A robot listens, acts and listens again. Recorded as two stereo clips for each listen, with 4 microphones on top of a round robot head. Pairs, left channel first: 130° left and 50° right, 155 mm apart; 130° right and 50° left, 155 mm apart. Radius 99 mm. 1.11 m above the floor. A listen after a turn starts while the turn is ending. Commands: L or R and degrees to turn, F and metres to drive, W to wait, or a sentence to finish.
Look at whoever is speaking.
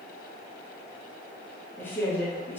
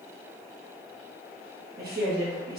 L55
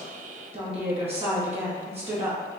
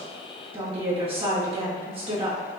Found it: a woman speaking, straight ahead.